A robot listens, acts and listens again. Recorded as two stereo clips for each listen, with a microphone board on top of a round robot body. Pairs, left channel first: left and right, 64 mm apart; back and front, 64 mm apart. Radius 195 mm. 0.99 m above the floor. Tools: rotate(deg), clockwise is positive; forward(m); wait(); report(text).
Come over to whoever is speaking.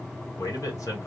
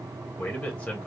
rotate(-115)
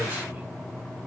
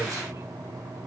wait()
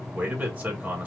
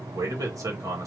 rotate(25)
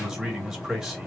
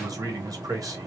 rotate(10)
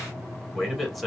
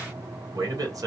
forward(1.0)
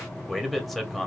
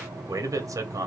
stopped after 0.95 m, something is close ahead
report("I am next to the man speaking.")